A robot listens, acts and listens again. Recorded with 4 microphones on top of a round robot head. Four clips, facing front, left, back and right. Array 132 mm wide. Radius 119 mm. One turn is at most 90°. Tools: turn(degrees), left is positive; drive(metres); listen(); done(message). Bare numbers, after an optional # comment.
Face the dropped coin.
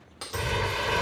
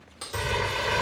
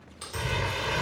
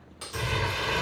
# The dropped coin: 10° left.
turn(10)
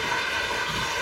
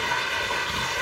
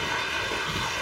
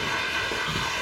done("I heard a dropped coin from this way, but can't make it out now.")